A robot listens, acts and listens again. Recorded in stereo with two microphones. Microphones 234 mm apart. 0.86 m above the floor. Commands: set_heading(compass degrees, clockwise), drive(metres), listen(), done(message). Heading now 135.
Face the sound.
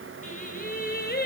set_heading(95)
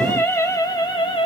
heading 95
set_heading(75)
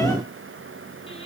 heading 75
listen()
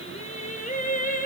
set_heading(40)
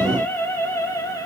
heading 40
set_heading(25)
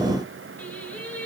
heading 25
done("Facing the singing, 2 to 4 m away.")